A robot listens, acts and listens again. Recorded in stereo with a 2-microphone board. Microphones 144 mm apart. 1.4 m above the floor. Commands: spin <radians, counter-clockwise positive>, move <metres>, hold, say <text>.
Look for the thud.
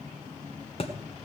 spin 0.70
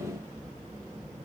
hold
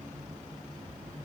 say I heard a thud, but can't make it out now. It was about straight ahead or 100° left.